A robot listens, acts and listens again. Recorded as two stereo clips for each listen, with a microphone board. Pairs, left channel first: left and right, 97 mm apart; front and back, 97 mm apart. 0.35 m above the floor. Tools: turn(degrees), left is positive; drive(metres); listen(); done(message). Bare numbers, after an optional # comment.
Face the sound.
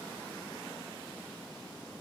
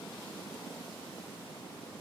listen()
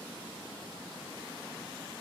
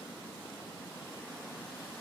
listen()
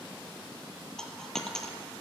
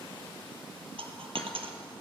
# The dropped coin: 175° left.
turn(175)
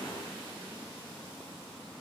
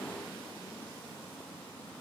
done("Facing where the dropped coin came from. I can't hear it now.")